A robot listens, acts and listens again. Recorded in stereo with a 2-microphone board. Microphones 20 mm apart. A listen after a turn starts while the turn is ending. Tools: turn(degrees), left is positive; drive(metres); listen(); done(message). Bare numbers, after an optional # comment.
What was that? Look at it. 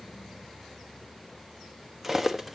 # The cutlery clinking: about 15° right or 165° right.
turn(-15)
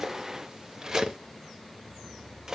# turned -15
# So it is at 150° right.
turn(-150)
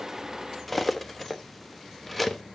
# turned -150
# The cutlery clinking is now 10° left.
turn(10)
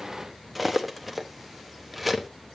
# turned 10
done("Found it: cutlery clinking, straight ahead.")